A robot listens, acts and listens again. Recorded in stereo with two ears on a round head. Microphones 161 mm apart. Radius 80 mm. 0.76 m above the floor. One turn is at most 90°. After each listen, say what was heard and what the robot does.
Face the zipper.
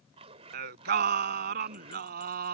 The zipper: about 35° right or 145° right. Turn 35° right.
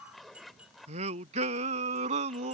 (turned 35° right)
Facing the zipper.